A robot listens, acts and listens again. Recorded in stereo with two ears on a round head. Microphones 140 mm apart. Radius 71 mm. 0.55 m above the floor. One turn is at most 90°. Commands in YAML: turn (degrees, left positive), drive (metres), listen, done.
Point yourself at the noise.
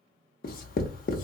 turn: 60
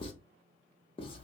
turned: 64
turn: 40
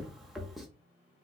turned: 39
done: "Facing the writing."